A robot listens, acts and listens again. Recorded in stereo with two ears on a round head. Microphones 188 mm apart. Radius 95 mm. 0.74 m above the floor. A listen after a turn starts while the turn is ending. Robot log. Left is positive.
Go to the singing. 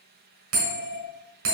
cmd idle
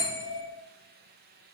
cmd idle
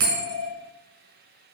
end: I can't make out singing to turn to.